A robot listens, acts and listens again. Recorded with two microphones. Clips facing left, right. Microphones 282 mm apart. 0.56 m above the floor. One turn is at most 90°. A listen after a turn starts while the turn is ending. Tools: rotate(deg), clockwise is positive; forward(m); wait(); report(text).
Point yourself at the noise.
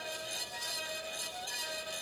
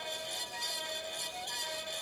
wait()
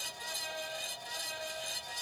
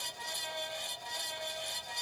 wait()
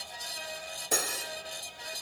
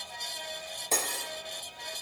rotate(-30)
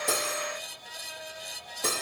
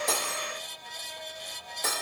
rotate(-90)
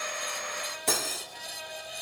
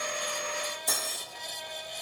rotate(-85)
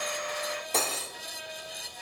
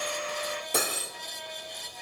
rotate(15)
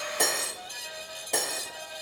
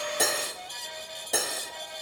report("Facing the cutlery clinking.")